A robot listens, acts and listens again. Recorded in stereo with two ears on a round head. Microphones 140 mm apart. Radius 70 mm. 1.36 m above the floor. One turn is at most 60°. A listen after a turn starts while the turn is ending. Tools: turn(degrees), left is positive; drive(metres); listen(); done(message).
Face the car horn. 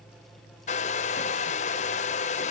listen()
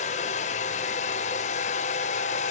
listen()
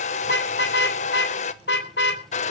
turn(degrees=60)
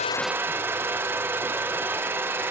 turn(degrees=30)
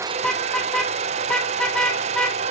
done("Found it: a car horn, straight ahead.")